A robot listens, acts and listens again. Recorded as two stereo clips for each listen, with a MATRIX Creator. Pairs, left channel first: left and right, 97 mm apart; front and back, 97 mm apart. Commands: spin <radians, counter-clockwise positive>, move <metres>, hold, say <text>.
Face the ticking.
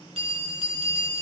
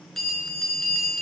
hold
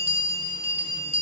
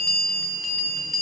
hold
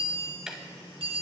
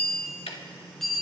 say Found it: ticking, straight ahead.